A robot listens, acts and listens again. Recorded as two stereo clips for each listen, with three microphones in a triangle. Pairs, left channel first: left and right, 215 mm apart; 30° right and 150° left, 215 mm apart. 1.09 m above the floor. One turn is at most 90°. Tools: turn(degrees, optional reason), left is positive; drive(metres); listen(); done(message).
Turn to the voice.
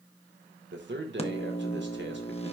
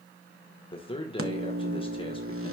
turn(degrees=-90, reason="The man speaking: 95° right.")
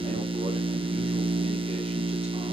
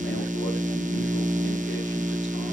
listen()
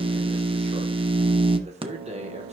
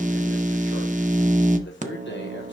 turn(degrees=-35, reason="The man speaking is now 35° right.")
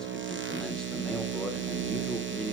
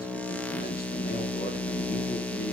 listen()
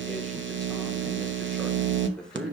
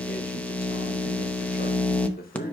listen()
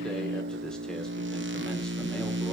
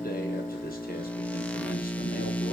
done("Facing where the man speaking came from. I can't hear it now.")